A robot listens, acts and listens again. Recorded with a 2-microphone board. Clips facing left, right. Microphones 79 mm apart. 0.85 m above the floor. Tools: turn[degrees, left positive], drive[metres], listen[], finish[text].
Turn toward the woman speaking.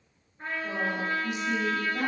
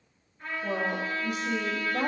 Thought: The woman speaking: about 50° right or 130° right.
Action: turn[-50]
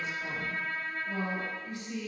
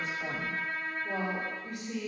Thought: So it is at 75° right.
Action: turn[-75]
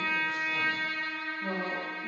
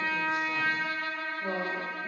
Thought: The woman speaking is now 30° right.
Action: turn[-30]
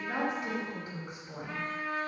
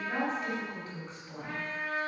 Thought: The woman speaking is now 10° left.
Action: turn[10]
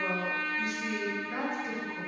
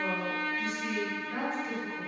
Thought: The woman speaking is now 10° left.
Action: turn[10]
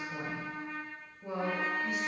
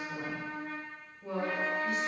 Action: finish[Facing the woman speaking.]